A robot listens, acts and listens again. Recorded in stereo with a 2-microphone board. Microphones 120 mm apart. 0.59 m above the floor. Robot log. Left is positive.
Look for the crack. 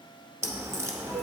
note: The crack: about 25° right or 155° right.
cmd yaw -25
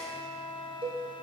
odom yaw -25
cmd idle
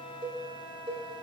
end: I heard a crack, but can't make it out now. It was about straight ahead or 130° right.